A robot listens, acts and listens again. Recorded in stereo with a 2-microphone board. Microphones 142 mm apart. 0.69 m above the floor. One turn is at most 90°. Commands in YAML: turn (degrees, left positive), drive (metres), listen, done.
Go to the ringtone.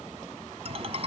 turn: -45
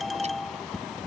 drive: 1.0
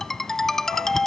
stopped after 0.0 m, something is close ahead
done: "Blocked. The ringtone is further on, straight ahead."